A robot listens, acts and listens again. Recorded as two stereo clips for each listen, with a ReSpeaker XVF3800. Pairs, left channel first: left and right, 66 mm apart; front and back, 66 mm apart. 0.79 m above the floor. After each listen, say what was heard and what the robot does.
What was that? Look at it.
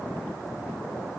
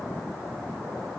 Keep listening.
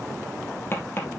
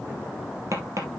The tapping: 145° left. Turn 145° left.
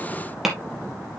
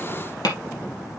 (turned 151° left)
Facing the tapping.